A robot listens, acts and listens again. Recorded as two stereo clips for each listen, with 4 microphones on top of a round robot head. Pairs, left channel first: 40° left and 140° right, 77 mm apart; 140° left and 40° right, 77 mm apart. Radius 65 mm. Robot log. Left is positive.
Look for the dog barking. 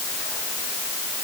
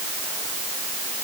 cmd idle
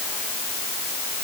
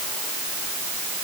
cmd idle
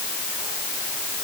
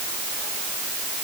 end: I can't make out a dog barking to turn to.